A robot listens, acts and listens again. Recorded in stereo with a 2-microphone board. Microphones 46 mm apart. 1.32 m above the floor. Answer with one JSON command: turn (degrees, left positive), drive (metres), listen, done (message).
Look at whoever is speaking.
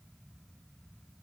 {"listen": true}
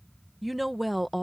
{"turn": 30}
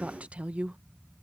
{"turn": -35}
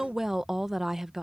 {"turn": -10}
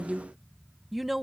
{"done": "Facing the woman speaking."}